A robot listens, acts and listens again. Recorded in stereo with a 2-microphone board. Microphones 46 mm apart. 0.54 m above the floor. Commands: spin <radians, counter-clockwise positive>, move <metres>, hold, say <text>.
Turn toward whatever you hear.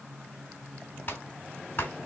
spin 0.70
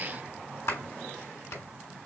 spin 1.75
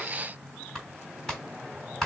spin 0.17
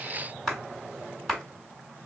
say Found it: a clap, straight ahead.